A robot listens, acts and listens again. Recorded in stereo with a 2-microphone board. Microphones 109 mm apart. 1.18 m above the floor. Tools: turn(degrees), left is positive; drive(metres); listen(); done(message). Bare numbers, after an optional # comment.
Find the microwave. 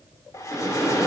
turn(30)
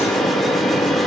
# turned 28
# So it is at 150° left.
turn(150)
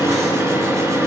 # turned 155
done("Facing the microwave, 1 to 2 m away.")